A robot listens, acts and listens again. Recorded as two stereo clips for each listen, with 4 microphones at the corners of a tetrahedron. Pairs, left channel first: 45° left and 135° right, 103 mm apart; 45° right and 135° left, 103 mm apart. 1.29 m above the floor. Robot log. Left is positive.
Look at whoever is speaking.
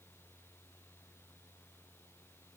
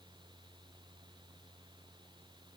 cmd idle
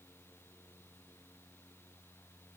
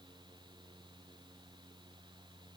cmd idle
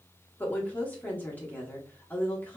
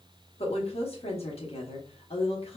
note: The woman speaking: 30° right.
cmd yaw -30
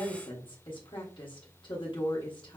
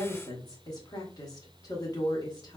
end: Found it: a woman speaking, straight ahead.